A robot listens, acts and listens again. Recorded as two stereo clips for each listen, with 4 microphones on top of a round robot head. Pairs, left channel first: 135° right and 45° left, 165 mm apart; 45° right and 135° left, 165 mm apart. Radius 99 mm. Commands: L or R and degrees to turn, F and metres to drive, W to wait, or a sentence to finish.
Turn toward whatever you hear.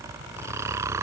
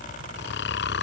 R30
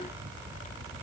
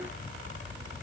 W
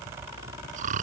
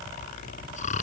Facing the snoring.